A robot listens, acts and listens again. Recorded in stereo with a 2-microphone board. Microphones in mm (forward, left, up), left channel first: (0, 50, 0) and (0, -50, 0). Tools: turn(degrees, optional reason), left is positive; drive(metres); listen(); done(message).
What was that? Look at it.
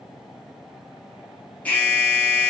turn(degrees=15, reason="The alarm: about 15° left or 165° left.")
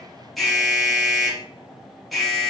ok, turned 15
done("Facing the alarm.")